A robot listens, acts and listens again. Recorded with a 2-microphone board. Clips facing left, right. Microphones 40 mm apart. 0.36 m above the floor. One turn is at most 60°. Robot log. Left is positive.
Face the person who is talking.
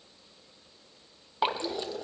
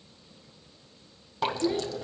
note: The child speaking: about 20° right or 160° right.
cmd yaw -20
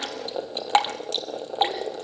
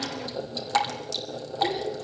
cmd idle
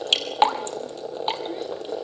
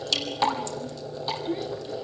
end: Facing the child speaking.